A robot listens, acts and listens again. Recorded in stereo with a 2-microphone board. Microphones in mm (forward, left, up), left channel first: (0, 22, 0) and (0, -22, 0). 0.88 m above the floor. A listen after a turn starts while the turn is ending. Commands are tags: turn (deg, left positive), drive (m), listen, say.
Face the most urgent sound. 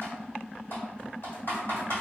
<listen/>
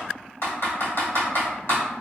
<listen/>
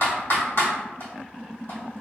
<say>I can't make out anything urgent to turn to.</say>